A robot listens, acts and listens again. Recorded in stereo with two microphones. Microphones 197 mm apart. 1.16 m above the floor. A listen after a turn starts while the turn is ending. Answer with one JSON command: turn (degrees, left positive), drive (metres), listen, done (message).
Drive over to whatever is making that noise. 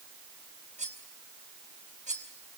{"turn": -40}
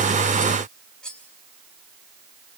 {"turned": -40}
{"drive": 1.0}
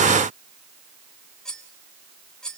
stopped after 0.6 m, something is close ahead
{"done": "Blocked. The cutlery clinking is further on, straight ahead."}